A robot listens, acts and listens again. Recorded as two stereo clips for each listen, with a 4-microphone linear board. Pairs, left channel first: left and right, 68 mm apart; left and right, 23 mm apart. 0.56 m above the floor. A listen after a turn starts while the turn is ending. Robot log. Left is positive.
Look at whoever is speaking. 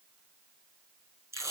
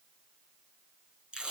cmd idle
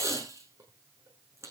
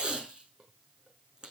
cmd idle
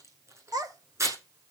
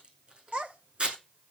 note: The child speaking: about 70° right or 110° right.
cmd yaw -70
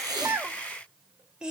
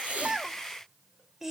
note: So it is at 15° right.
cmd yaw -15
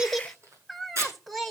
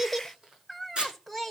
end: Facing the child speaking, 2 to 4 m away.